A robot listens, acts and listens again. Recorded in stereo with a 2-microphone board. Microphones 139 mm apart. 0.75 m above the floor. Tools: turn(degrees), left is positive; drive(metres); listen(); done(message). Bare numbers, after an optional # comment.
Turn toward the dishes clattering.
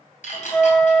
# The dishes clattering: about 65° left or 115° left.
turn(65)
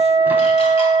listen()
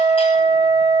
listen()
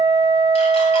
done("I heard dishes clattering, but can't make it out now. It was about straight ahead or 50° left.")